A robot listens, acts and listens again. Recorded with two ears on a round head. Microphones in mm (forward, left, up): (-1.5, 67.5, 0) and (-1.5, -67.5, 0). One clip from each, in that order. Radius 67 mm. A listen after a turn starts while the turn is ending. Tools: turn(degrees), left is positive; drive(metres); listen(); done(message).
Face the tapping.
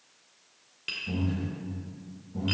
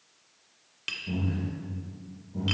turn(degrees=-50)
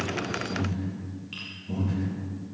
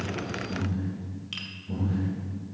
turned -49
listen()
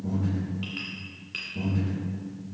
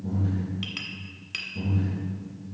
turn(degrees=-80)
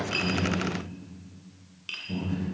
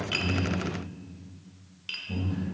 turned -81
done("Found it: tapping, straight ahead.")